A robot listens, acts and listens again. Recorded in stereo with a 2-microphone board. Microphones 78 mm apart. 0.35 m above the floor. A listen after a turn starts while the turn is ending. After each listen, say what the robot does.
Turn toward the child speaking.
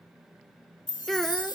Turn 30° left.
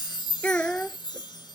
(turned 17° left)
Turn 20° left.
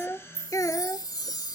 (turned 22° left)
Turn 135° left.
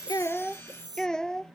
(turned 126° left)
Turn 10° left.
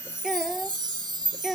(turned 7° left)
Found it: a child speaking, straight ahead.